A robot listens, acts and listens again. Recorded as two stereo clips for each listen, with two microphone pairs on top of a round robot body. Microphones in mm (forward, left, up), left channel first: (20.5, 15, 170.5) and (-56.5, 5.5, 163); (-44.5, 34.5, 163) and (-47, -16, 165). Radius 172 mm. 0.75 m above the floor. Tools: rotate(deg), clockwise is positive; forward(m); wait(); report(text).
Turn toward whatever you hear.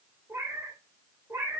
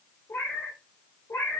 rotate(-135)
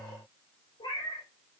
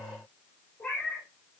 rotate(-20)
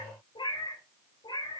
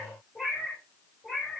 report("Found it: a cat meowing, straight ahead, over 4 m away.")